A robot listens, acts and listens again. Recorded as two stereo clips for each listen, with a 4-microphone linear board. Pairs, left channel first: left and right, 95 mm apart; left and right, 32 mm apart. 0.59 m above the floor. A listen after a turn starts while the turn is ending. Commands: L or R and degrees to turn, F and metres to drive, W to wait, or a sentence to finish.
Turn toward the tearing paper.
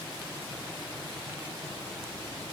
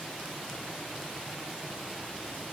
W
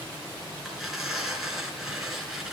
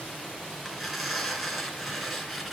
R30
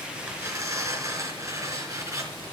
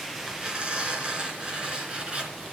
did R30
R145
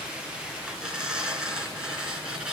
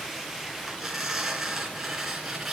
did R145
Facing the tearing paper, 2 to 4 m away.